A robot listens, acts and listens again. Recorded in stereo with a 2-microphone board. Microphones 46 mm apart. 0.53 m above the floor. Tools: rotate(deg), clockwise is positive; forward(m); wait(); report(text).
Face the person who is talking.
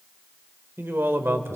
rotate(65)
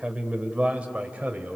rotate(30)
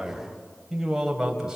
rotate(10)
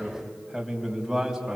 report("Facing the man speaking, 2 to 4 m away.")